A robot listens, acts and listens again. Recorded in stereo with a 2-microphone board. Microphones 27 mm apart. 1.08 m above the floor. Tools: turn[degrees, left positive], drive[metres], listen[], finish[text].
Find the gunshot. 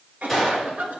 Action: turn[-30]
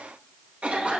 Action: listen[]
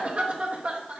Action: finish[I heard a gunshot, but can't make it out now. It was about 25° left or 145° right.]